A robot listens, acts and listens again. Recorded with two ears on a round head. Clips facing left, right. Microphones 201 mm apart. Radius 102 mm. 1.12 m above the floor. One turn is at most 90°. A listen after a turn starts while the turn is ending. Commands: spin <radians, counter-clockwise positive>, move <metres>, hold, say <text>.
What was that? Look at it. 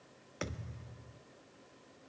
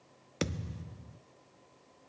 spin -0.79
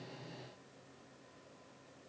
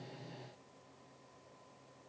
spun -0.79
hold
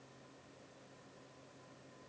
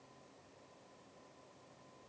say I heard a thud, but can't make it out now. It was about straight ahead or 90° right.